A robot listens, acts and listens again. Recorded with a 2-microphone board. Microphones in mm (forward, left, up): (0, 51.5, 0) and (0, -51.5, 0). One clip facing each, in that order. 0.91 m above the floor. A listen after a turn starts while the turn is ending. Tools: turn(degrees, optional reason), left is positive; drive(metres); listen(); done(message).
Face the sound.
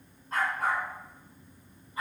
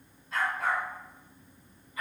turn(degrees=30, reason="The dog barking: about 30° left or 150° left.")
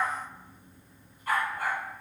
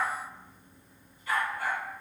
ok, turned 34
turn(degrees=130, reason="So it is at 130° left.")
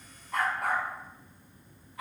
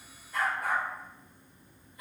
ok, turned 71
turn(degrees=80, reason="The dog barking is now 80° left.")
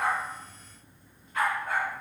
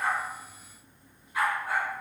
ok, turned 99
turn(degrees=-10, reason="The dog barking is now 10° right.")
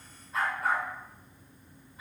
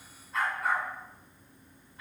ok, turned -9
done("Found it: a dog barking, straight ahead, 2 to 4 m away.")